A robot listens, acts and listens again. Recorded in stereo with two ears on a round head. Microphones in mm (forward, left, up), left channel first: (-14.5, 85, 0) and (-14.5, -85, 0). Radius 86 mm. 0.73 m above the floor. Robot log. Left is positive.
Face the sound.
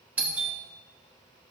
cmd yaw -30
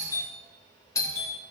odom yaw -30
note: So it is at 20° left.
cmd yaw +20
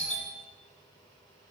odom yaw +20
note: The doorbell is now 10° left.
cmd yaw +10
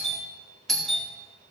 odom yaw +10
end: Found it: a doorbell, straight ahead.